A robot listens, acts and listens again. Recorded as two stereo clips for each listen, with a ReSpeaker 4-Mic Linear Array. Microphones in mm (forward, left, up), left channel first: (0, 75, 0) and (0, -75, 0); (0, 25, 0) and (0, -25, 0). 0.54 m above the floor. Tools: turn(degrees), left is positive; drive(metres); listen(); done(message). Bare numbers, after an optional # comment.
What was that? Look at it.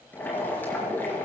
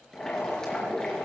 turn(30)
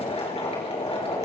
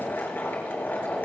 # So it is at 135° left.
turn(135)
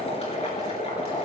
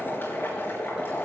# The boiling is now 45° left.
turn(45)
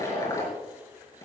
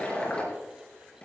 # The boiling is now 20° left.
turn(20)
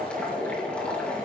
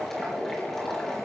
# The boiling is now 10° left.
turn(10)
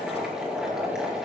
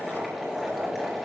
done("Found it: boiling, straight ahead, over 4 m away.")